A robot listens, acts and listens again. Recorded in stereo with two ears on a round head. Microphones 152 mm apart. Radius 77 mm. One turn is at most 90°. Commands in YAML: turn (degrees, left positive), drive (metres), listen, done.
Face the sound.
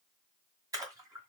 turn: -20
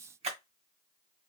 turn: -90
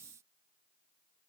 turn: -45
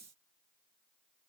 done: "Facing where the splash came from. I can't hear it now."